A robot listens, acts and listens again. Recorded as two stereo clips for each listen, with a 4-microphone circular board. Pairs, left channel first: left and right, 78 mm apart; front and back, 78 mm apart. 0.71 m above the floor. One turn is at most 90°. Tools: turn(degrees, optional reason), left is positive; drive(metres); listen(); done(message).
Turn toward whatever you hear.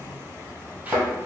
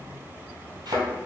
turn(degrees=-90, reason="The thud: 160° right.")
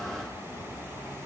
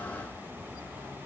turn(degrees=-70, reason="Nothing new. It was at 70° right.")
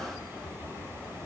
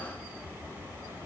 done("I heard a thud from this way, but can't make it out now.")